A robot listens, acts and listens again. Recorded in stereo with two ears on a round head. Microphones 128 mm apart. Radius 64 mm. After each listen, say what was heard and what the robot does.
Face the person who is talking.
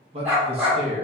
The man speaking: about 45° right or 135° right. Turn 45° right.
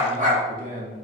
So it is at 90° right. Turn 90° right.
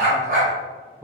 The man speaking is now 25° right. Turn 25° right.
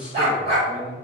The man speaking is now 10° right. Turn 10° right.
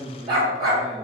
Found it: a man speaking, straight ahead, under 1 m away.